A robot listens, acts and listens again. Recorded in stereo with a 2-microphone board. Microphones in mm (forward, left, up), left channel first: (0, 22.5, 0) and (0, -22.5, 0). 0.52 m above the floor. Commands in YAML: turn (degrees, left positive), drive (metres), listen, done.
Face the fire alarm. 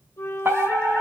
turn: -60
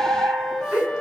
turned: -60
turn: -55
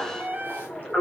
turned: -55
done: "Facing the fire alarm, over 4 m away."